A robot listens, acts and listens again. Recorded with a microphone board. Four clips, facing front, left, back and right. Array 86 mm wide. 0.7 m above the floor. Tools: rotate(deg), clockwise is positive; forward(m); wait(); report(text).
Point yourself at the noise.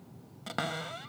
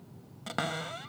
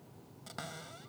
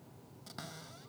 rotate(-55)
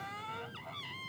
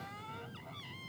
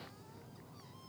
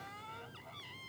report("Found it: a cupboard door, straight ahead.")